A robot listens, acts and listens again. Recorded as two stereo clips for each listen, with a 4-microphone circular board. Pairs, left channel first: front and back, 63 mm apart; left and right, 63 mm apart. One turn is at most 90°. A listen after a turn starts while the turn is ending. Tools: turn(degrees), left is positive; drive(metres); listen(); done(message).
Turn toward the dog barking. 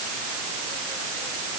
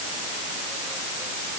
listen()
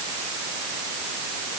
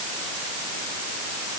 listen()
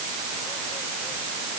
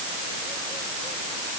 done("I can't make out a dog barking to turn to.")